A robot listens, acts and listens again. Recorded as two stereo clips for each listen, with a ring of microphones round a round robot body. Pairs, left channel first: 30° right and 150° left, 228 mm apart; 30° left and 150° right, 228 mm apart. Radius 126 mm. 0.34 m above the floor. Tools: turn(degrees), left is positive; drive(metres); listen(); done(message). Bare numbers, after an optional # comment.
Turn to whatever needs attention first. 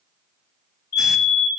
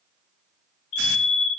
done("Found it: a fire alarm, straight ahead, over 4 m away.")